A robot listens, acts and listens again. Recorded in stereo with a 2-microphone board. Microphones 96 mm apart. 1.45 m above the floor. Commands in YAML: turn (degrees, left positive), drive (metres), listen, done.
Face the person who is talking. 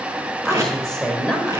turn: 30
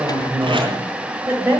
turn: -25
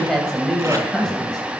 done: "Facing the woman speaking."